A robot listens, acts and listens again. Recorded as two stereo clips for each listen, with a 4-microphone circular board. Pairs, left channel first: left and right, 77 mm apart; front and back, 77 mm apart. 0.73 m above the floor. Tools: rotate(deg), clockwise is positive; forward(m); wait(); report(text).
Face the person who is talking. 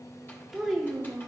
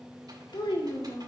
rotate(10)
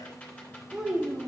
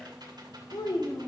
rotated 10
rotate(15)
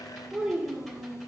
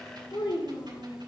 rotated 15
rotate(20)
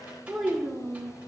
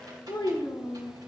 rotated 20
rotate(10)
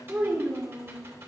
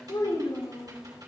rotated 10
rotate(10)
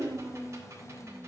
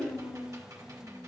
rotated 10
report("Facing the child speaking.")